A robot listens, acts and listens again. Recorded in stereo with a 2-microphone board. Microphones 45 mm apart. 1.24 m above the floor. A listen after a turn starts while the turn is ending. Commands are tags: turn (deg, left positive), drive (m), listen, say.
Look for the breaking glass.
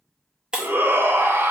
<turn deg="-20"/>
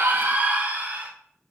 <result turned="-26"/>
<listen/>
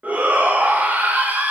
<say>I heard breaking glass, but can't make it out now. It was about 5° left or 135° right.</say>